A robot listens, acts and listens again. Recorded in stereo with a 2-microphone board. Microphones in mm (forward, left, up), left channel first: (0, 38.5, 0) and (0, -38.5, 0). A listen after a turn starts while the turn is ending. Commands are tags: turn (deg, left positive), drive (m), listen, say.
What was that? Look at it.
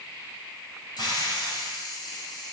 <turn deg="65"/>
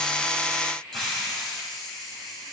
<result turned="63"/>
<say>Found it: a hiss, straight ahead.</say>